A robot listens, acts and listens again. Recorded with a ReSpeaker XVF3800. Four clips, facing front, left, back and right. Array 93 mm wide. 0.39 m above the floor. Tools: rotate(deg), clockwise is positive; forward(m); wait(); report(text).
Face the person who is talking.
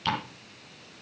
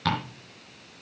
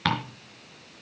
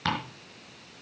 wait()
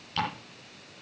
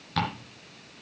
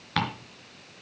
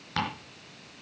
wait()
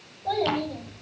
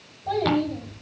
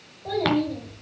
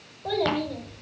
rotate(95)
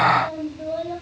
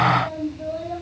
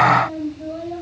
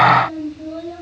report("Facing the child speaking, over 4 m away.")